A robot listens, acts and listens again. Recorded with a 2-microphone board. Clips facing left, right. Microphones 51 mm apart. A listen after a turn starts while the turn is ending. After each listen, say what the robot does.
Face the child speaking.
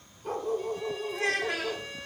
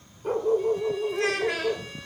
Turn 90° right.
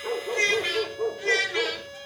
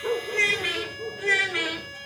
Turn 10° right.
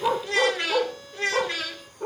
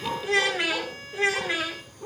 Turn 15° right.
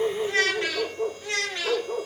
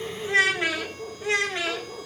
Turn 20° right.
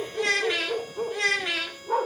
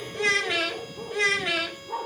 Facing the child speaking.